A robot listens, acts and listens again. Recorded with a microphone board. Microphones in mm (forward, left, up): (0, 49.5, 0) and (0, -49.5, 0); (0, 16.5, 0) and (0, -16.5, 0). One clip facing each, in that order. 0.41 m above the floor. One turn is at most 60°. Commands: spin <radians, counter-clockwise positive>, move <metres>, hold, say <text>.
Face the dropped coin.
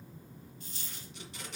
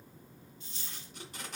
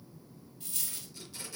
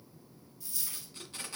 spin 0.79
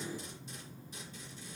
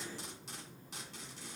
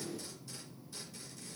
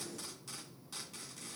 hold
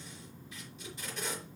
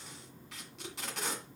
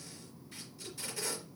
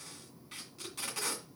say I heard a dropped coin, but can't make it out now. It was about straight ahead or 90° left.